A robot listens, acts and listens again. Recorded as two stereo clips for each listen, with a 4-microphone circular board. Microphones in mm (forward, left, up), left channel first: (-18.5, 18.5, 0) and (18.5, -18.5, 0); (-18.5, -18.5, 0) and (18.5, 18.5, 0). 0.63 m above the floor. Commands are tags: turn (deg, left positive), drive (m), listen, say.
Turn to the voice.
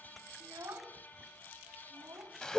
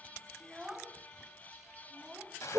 <turn deg="-40"/>
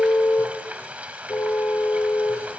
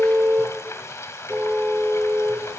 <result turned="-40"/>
<listen/>
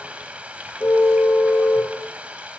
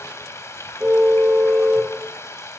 <listen/>
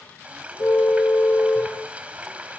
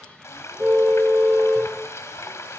<say>I heard a child speaking from this way, but can't make it out now.</say>